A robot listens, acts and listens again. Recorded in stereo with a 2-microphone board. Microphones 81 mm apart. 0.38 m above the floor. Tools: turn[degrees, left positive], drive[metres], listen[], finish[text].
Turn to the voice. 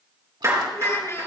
Thought: The child speaking: about 35° left or 145° left.
Action: turn[35]
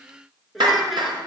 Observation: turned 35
Action: finish[Facing the child speaking.]